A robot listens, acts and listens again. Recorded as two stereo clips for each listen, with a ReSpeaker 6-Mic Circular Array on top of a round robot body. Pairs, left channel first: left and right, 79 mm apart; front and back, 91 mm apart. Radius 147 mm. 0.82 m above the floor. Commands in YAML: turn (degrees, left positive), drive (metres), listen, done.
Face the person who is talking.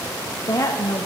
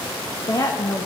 turn: 50
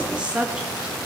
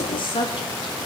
turn: -10
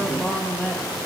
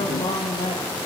done: "Found it: a woman speaking, straight ahead, 1 to 2 m away."